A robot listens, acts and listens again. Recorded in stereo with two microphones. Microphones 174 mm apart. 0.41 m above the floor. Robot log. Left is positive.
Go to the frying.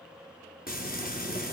note: The frying: about 60° left or 120° left.
cmd yaw +60
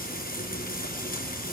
note: So it is at 60° left.
cmd yaw +60
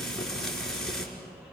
cmd fwd 1.0
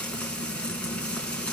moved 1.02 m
cmd fwd 1.0
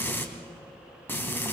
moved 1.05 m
note: The frying is now 10° left.
cmd yaw +10
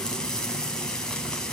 cmd fwd 1.0
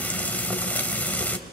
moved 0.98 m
note: The frying is now 10° left.
cmd yaw +10
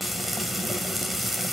cmd fwd 1.0
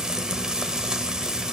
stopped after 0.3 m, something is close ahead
end: Arrived at the frying, straight ahead.